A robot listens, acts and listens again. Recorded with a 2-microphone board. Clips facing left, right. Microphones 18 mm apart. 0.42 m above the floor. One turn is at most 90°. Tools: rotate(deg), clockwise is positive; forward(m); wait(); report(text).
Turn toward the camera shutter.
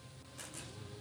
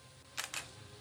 rotate(70)
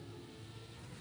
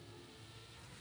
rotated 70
wait()
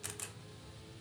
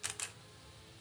rotate(25)
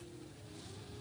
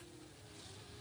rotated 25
wait()
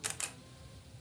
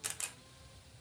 rotate(-10)
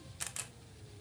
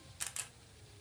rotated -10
report("Found it: a camera shutter, straight ahead.")